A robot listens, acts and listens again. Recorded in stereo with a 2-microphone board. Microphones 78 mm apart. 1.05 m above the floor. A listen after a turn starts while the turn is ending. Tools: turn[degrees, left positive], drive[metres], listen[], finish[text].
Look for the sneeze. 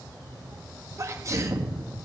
Thought: The sneeze: about 40° right or 140° right.
Action: turn[-40]
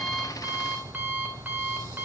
Action: listen[]
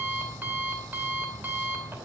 Action: finish[I heard a sneeze, but can't make it out now. It was about straight ahead or 100° right.]